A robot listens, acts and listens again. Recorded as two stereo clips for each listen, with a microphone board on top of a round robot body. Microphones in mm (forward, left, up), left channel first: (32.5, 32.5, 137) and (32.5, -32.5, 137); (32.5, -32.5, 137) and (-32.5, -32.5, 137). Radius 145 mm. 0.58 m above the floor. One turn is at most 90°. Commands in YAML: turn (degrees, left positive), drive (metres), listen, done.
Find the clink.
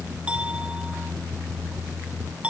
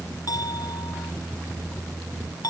turn: -20
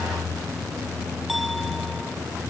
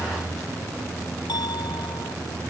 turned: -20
listen: true
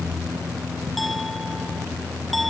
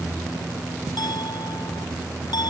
listen: true
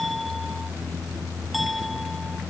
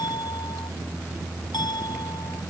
done: "I heard a clink from this way, but can't make it out now."